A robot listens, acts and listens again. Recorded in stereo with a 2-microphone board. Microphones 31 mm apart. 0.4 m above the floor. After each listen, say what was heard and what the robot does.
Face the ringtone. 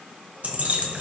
Keep listening.
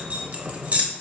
Keep listening.
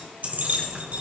I can't make out a ringtone to turn to.